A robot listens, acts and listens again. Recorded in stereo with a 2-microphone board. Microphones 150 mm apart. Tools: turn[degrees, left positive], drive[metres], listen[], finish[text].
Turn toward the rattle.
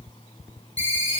Action: listen[]
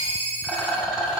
Action: turn[-30]
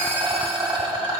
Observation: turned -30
Thought: So it is at 145° right.
Action: turn[-145]
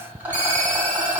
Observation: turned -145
Thought: The rattle is now 15° right.
Action: turn[-15]
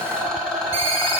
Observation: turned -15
Action: finish[Facing the rattle.]